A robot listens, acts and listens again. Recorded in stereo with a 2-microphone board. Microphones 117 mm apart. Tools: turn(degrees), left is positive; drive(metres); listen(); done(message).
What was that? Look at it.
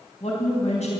turn(degrees=70)
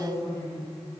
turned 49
turn(degrees=25)
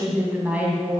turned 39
turn(degrees=-15)
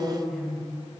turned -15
done("Found it: a woman speaking, straight ahead.")